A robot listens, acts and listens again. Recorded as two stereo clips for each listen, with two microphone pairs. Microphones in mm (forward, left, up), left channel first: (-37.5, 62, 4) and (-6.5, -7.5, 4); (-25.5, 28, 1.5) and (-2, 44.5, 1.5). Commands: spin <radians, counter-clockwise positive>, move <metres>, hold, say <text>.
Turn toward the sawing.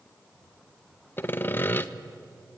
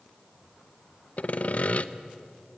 spin 3.05
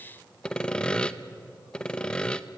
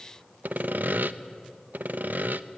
spin 0.70
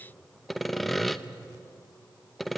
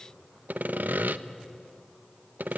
spin 0.52
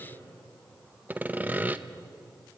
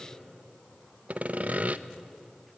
say Facing the sawing, under 1 m away.